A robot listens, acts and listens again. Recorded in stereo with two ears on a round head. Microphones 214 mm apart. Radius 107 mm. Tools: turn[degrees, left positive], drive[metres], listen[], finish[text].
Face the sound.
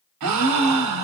Action: turn[-90]
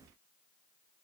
Action: finish[I heard a gasp from this way, but can't make it out now.]